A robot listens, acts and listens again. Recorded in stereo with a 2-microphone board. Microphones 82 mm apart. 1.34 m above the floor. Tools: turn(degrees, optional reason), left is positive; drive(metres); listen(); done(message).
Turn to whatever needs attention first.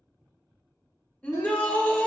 turn(degrees=30)
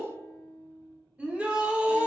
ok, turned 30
turn(degrees=-15, reason="So it is at 15° right.")
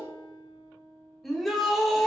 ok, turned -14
done("Facing the shout.")